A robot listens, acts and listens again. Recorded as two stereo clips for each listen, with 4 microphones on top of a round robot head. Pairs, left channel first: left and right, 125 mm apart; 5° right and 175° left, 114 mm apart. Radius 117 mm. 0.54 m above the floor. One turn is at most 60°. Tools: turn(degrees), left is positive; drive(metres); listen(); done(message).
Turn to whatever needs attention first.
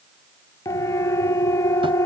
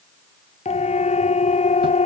turn(degrees=20)
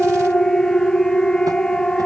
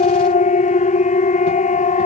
done("Found it: a siren, straight ahead.")